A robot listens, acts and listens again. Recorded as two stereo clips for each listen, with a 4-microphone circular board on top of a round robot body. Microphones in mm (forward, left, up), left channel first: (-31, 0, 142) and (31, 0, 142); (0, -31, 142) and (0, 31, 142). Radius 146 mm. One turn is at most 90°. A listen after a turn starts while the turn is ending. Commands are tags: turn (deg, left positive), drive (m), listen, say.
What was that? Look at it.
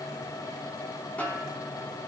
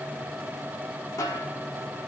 <turn deg="-90"/>
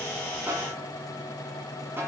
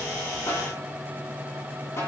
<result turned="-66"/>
<turn deg="-50"/>
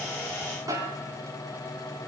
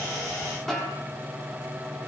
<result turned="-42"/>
<say>Found it: a snare drum, straight ahead.</say>